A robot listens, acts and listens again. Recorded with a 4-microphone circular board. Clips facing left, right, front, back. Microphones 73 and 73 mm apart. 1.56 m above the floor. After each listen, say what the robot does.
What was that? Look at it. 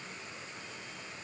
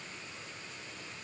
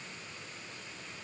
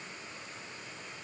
Keep listening.
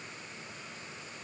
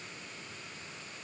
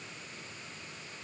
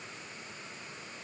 Keep listening.
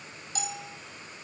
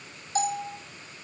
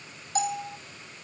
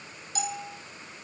Turn 40° right.
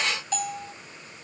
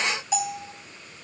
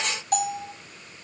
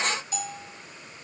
Turn 10° right.
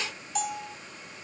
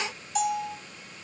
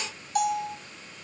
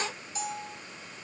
Facing the bell, 2 to 4 m away.